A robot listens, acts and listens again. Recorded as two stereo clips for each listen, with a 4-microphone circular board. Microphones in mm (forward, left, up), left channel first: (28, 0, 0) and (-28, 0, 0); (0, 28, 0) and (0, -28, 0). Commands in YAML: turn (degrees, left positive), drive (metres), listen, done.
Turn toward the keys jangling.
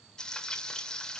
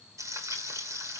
listen: true
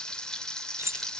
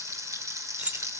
turn: -150
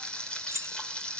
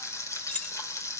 turn: 20
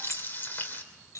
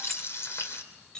turn: 10
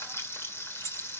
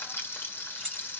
done: "Found it: keys jangling, straight ahead, 2 to 4 m away."